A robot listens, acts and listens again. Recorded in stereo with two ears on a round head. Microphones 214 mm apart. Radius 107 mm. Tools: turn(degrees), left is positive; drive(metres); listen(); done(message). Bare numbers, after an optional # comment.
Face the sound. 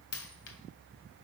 # The dropped coin: about 65° left or 115° left.
turn(65)
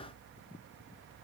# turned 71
listen()
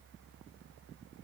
done("I heard a dropped coin, but can't make it out now. It was about 5° right or 45° left.")